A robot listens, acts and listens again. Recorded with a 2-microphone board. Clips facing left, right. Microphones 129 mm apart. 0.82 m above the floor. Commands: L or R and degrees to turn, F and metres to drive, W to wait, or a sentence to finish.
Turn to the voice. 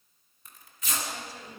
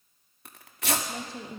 R25
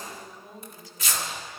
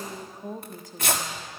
R130
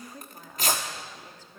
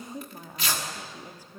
R15
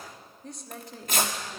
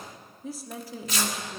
Found it: a woman speaking, straight ahead, 1 to 2 m away.